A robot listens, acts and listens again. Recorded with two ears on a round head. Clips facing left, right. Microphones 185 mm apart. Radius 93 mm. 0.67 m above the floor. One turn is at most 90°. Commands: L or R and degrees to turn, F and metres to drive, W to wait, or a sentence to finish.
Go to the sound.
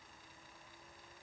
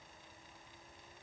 W
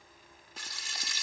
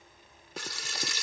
R60
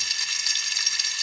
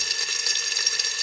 R50
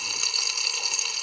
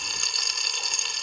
F1.0
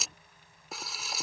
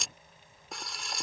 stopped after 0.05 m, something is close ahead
Something is in my way. I am facing the frying but have not reached it.